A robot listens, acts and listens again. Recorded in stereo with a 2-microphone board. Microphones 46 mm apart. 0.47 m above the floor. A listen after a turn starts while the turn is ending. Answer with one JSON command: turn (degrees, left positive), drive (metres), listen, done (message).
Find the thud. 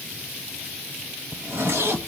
{"listen": true}
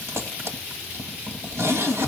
{"listen": true}
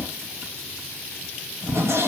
{"done": "I can't make out a thud, only a zipper."}